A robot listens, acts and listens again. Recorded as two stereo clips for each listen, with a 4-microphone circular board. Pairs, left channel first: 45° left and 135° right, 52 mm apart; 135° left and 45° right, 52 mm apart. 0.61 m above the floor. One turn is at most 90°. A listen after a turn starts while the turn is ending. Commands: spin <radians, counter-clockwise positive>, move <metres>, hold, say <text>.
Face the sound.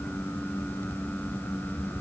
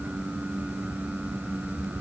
hold
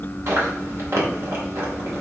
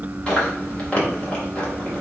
spin -1.57
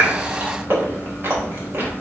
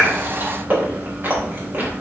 spin -1.57
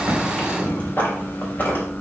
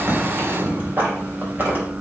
say Found it: chewing, straight ahead.